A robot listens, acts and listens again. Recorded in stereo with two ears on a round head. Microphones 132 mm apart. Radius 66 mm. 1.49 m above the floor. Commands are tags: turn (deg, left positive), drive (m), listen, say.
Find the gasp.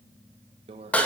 <listen/>
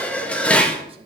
<listen/>
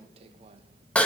<say>I can't make out a gasp, only a microwave and dishes clattering.</say>